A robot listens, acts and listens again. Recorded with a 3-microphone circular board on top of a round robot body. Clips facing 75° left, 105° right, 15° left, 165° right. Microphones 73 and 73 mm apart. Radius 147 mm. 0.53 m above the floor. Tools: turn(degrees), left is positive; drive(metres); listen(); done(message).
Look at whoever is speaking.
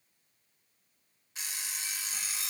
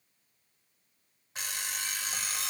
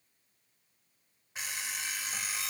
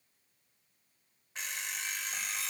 listen()
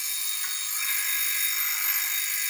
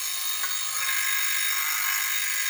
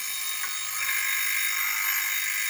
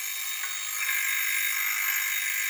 listen()
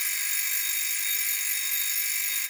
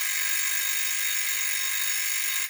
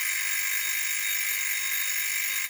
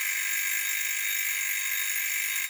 done("I can't make out anyone speaking, only an alarm clock.")